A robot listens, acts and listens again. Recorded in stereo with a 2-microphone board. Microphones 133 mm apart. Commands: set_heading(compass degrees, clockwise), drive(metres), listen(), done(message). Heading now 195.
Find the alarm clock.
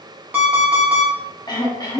set_heading(225)
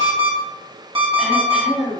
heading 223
set_heading(358)
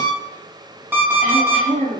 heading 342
set_heading(357)
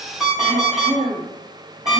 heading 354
done("Found it: an alarm clock, straight ahead.")